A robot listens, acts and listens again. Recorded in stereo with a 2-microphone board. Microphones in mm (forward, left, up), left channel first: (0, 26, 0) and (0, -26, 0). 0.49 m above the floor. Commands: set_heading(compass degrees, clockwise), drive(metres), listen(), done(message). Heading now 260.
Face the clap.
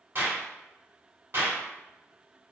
set_heading(310)
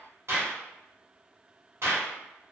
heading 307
set_heading(22)
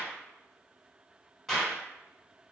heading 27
done("Facing the clap, 1 to 2 m away.")